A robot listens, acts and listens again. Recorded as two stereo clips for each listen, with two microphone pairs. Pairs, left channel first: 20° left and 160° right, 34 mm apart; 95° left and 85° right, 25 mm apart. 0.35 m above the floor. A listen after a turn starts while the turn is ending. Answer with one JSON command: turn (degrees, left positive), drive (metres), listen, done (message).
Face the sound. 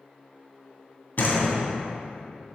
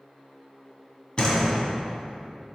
{"turn": 45}
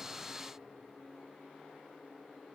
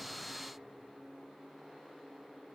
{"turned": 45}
{"done": "Facing where the door slam came from. I can't hear it now."}